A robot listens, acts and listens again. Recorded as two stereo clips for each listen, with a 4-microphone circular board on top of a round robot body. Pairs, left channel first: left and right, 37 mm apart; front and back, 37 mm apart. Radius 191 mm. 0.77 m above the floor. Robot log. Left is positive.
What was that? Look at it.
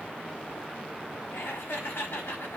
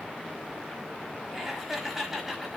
note: The laughter: 95° left.
cmd yaw +95
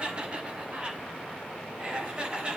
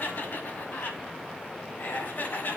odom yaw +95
note: The laughter is now 30° right.
cmd yaw -30
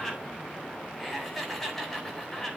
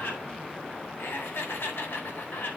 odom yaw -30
end: Found it: laughter, straight ahead, over 4 m away.